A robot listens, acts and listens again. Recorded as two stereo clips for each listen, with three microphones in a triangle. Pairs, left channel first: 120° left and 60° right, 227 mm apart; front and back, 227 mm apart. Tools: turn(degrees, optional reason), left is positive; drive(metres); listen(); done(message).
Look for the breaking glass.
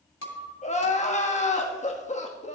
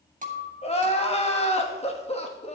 turn(degrees=125, reason="The breaking glass: 125° left.")
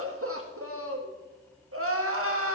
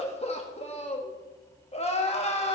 done("Facing where the breaking glass came from. I can't hear it now.")